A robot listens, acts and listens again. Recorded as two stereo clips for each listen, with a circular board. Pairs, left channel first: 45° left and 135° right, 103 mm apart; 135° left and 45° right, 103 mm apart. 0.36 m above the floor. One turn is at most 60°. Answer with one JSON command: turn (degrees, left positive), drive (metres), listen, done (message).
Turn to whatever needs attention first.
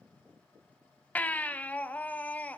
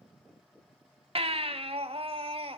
{"turn": -30}
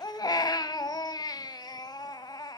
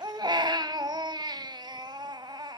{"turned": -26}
{"done": "Facing the baby crying, under 1 m away."}